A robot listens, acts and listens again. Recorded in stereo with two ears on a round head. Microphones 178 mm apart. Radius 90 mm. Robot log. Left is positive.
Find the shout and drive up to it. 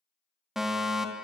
cmd idle
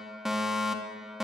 cmd idle
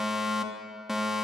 end: I can't make out a shout, only a fire alarm.